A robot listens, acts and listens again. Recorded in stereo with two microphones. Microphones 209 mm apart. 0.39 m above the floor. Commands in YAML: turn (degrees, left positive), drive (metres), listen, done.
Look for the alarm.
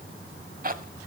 listen: true
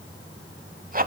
listen: true
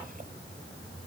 done: "I can't make out an alarm, only a zipper."